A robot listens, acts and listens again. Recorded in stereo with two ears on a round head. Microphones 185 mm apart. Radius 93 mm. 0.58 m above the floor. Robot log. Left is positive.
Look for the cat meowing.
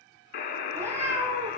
cmd yaw -30
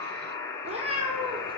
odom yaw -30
note: So it is at 155° right.
cmd yaw -155
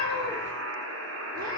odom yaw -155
note: The cat meowing is now 35° right.
cmd yaw -35
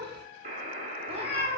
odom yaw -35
note: The cat meowing is now 30° right.
cmd yaw -30
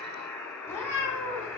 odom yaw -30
note: The cat meowing is now 10° left.
cmd yaw +10
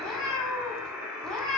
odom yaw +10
end: Facing the cat meowing, 2 to 4 m away.